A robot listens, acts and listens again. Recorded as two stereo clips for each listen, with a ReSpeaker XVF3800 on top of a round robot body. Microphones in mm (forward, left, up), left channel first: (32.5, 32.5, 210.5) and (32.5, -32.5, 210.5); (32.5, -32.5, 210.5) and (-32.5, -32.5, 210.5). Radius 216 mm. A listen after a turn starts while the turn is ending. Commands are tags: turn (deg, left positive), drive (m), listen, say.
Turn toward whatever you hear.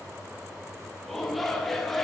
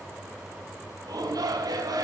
<turn deg="175"/>
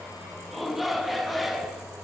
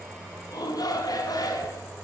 <say>Facing the shout.</say>